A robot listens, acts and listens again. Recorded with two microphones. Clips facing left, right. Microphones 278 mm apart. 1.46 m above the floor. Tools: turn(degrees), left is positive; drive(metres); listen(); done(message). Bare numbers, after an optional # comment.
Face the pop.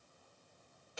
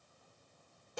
listen()
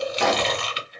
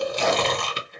# The pop: about 70° left or 110° left.
turn(70)
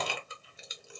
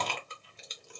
listen()
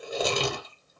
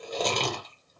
done("I heard a pop, but can't make it out now. It was about straight ahead or 40° left.")